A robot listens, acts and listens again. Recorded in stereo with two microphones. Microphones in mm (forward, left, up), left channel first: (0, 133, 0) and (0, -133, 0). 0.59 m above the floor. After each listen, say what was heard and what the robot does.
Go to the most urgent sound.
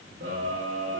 The scream: about 50° right or 130° right. Turn 50° right.
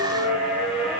Drive 1.0 m forward.
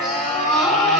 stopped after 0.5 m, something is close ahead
Blocked. The scream is further on, straight ahead.